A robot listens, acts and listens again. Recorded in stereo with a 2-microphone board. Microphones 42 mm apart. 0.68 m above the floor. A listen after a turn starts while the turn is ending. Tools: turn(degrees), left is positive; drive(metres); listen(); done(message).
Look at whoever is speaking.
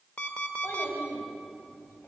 turn(degrees=70)
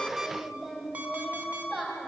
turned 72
done("Facing the child speaking.")